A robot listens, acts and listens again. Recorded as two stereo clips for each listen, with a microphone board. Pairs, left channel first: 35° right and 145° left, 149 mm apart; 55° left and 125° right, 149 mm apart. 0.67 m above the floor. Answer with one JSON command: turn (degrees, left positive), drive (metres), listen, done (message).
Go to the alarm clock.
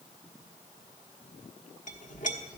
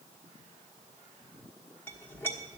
{"listen": true}
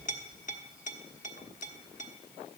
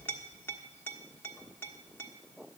{"listen": true}
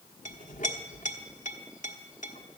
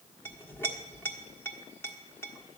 {"done": "I can't make out an alarm clock to turn to."}